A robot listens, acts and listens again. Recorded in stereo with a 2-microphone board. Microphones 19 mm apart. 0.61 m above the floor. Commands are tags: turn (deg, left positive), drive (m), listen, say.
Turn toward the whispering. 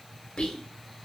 <turn deg="55"/>
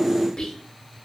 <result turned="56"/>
<turn deg="55"/>
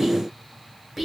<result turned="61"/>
<say>Found it: whispering, straight ahead, 1 to 2 m away.</say>